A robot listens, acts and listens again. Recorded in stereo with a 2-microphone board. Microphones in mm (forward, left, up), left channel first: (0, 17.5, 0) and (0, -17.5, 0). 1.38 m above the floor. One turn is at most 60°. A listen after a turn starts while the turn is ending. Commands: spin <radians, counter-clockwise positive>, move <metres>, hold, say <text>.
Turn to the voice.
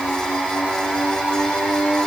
hold
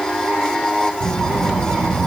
spin -1.05
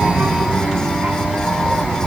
spin -0.96
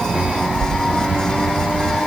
spin -0.35
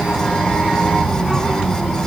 say Found it: a child speaking, straight ahead.